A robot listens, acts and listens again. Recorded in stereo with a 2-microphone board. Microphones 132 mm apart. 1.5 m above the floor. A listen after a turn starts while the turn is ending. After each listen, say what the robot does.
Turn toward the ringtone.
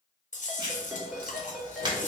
Turn 30° left.
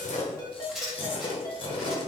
Turn 150° left.
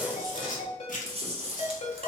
Turn 55° left.
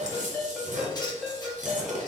Facing the ringtone.